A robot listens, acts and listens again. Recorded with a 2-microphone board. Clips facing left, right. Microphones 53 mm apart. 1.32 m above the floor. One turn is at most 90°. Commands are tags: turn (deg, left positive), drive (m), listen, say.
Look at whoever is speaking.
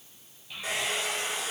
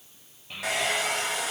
<turn deg="-45"/>
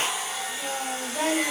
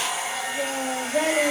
<turn deg="-90"/>
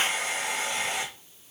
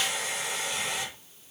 <listen/>
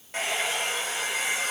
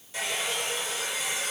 <listen/>
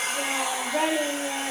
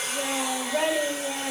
<say>Facing the child speaking.</say>